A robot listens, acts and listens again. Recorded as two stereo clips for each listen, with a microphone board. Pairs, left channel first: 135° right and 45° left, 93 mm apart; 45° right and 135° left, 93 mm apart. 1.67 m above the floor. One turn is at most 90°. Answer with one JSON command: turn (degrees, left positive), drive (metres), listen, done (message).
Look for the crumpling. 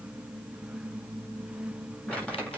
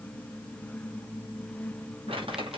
{"turn": 90}
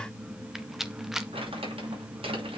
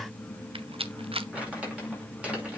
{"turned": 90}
{"turn": 60}
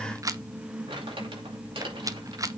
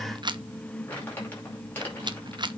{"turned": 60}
{"turn": 25}
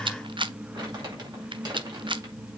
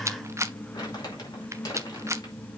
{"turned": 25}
{"done": "Found it: crumpling, straight ahead."}